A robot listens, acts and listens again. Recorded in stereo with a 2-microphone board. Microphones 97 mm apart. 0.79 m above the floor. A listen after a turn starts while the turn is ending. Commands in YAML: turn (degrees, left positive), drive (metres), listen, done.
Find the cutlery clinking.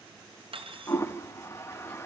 turn: -70
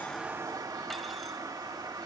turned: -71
listen: true
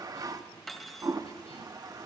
done: "Facing the cutlery clinking."